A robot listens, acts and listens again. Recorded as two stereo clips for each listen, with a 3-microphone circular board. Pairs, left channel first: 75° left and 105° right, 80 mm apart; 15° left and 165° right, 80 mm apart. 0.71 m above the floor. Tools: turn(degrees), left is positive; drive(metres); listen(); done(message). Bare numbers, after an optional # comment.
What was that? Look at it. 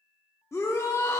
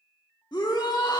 # The shout: 25° left.
turn(25)
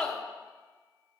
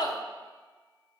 done("Facing the shout.")